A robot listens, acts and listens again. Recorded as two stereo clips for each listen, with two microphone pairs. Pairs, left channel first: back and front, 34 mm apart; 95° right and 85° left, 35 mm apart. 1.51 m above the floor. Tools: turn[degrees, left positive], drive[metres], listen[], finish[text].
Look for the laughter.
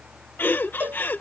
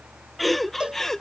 Thought: The laughter: 170° right.
Action: turn[-170]
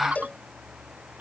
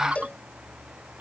Thought: The laughter is now 45° left.
Action: turn[45]
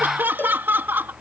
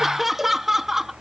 Thought: The laughter is now 10° left.
Action: turn[10]
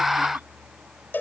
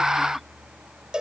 Action: listen[]
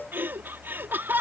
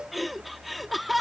Action: finish[Facing the laughter.]